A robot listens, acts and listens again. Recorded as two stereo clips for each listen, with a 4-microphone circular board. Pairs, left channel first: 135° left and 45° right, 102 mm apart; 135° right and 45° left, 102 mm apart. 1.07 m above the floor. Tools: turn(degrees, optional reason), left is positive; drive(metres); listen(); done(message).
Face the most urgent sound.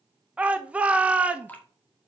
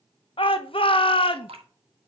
turn(degrees=-120, reason="The shout: 120° right.")
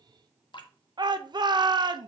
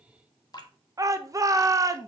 done("Facing the shout, under 1 m away.")